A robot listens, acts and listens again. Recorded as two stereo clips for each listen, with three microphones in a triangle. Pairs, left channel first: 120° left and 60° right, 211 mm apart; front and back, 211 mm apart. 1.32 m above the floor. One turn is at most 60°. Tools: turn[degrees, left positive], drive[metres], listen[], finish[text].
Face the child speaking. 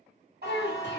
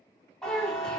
Thought: The child speaking: 85° left.
Action: turn[60]
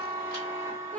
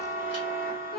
Thought: The child speaking is now 35° left.
Action: turn[35]
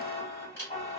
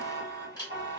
Action: listen[]
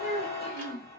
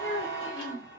Thought: The child speaking is now 15° right.
Action: turn[-15]
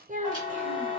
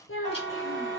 Action: finish[Found it: a child speaking, straight ahead, under 1 m away.]